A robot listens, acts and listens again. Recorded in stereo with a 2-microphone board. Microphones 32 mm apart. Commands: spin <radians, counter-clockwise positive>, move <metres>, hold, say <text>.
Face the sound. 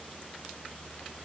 hold
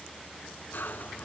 spin 1.22
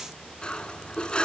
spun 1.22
spin 0.61
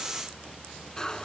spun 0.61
spin 0.44
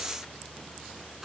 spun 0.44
say Facing the cutlery clinking.